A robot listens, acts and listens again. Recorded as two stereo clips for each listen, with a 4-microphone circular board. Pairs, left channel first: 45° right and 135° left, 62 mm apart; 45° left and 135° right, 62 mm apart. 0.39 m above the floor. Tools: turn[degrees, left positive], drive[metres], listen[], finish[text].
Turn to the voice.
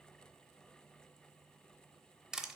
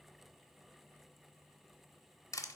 Action: listen[]
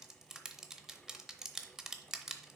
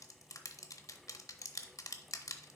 Action: listen[]
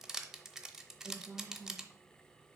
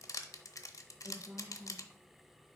Thought: The woman speaking: 170° right.
Action: turn[-170]
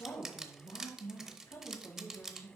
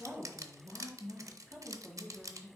Thought: The woman speaking is now 20° right.
Action: turn[-20]
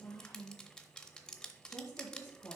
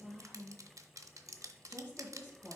Action: finish[Facing the woman speaking, 2 to 4 m away.]